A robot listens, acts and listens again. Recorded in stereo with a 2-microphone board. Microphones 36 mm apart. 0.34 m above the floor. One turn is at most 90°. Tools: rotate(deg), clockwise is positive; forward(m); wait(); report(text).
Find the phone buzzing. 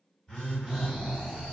rotate(-20)
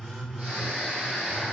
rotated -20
report("Facing the phone buzzing.")